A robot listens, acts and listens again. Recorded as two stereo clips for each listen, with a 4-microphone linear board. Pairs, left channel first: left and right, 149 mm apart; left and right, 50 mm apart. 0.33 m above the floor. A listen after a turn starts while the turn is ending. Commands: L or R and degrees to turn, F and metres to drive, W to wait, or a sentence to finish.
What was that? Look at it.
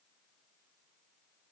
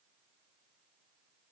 W
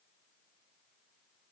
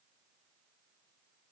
W
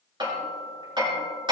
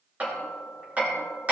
R30
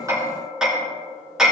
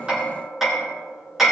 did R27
Found it: hammering, straight ahead.